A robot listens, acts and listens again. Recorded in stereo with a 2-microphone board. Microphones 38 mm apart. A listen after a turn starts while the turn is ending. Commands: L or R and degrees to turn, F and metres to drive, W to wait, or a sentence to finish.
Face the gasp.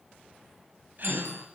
R50
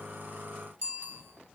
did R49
W
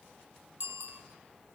I heard a gasp, but can't make it out now. It was about straight ahead or 80° right.